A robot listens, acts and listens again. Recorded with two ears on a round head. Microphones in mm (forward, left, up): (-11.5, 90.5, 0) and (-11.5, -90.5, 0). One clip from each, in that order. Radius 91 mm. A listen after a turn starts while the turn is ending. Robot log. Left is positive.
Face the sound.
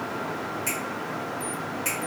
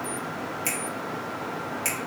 note: The finger snap: about 55° right or 125° right.
cmd yaw -55
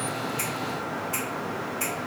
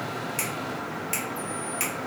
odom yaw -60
note: So it is at 60° right.
cmd yaw -60
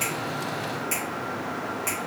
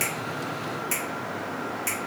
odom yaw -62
end: Facing the finger snap.